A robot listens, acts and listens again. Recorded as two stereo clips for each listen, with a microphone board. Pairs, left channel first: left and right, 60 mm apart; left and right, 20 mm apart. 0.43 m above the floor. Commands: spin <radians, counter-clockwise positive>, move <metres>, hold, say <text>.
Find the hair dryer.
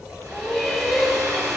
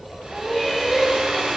spin -1.57
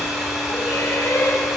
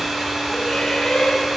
spin -0.17
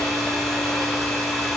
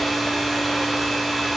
say Found it: a hair dryer, straight ahead, over 4 m away.